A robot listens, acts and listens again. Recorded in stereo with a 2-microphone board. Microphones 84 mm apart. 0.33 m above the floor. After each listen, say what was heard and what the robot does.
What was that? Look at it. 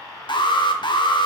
The alarm: about 60° left or 120° left. Turn 60° left.
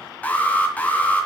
So it is at 20° left. Turn 20° left.
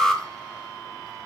Facing the alarm.